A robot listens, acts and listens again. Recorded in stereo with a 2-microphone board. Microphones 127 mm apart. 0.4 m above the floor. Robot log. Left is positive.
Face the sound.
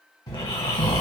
note: The snoring: about 30° left or 150° left.
cmd yaw +30
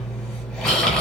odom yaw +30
end: Found it: snoring, straight ahead.